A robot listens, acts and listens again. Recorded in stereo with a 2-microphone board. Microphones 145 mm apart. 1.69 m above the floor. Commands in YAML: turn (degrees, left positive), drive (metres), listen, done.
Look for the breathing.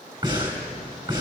turn: -25
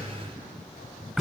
done: "Found it: breathing, straight ahead."